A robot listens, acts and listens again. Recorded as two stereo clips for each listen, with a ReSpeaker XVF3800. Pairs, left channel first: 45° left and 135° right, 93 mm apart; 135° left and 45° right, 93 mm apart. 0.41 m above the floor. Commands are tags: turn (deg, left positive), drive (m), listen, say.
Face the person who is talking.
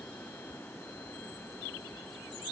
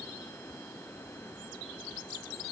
<listen/>
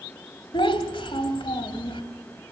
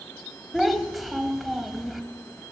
<turn deg="45"/>
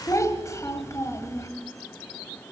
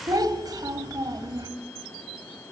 <say>Facing the child speaking, 1 to 2 m away.</say>